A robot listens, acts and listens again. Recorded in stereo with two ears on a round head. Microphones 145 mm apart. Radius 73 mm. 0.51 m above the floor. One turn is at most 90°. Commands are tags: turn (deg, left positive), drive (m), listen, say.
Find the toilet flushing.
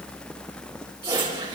<turn deg="-25"/>
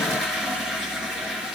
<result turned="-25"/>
<say>Facing the toilet flushing, over 4 m away.</say>